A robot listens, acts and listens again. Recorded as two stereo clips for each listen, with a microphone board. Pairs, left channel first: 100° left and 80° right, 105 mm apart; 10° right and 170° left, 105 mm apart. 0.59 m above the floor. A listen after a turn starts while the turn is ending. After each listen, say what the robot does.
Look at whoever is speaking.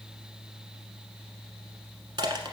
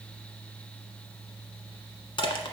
Keep listening.
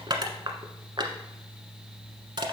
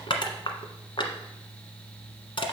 Keep listening.
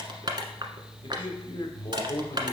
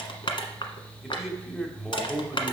Turn 80° left.
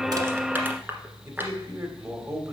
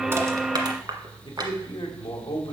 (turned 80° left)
Turn 25° right.
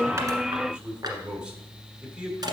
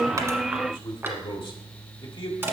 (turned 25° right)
Facing the man speaking.